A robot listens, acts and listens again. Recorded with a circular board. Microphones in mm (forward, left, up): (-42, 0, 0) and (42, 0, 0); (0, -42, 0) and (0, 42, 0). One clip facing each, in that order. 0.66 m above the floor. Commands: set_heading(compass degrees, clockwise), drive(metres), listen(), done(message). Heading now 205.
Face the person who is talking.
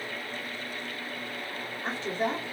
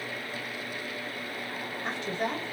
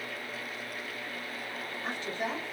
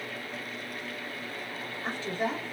set_heading(80)
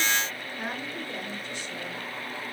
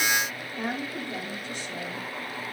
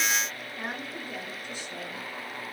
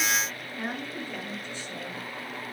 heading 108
done("Facing the woman speaking, 1 to 2 m away.")